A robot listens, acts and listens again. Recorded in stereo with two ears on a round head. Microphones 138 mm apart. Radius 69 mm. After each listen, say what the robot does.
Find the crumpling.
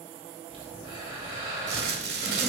Turn 90° right.
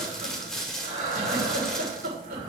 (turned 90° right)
Facing the crumpling.